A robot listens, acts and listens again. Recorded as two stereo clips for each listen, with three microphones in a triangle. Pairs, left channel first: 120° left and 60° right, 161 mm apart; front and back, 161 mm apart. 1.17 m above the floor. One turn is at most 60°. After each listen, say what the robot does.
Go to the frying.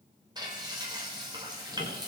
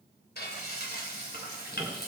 Drive 1.0 m forward.
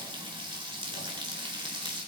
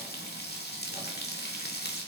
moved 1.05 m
Drive 1.0 m forward.
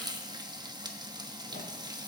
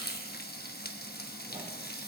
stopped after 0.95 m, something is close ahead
I am next to the frying.